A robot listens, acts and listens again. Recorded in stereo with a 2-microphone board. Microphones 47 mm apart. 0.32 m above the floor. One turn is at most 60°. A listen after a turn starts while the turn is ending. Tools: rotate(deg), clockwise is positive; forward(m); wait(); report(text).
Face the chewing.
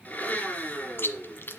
rotate(-50)
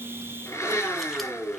wait()
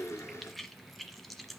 report("Found it: chewing, straight ahead.")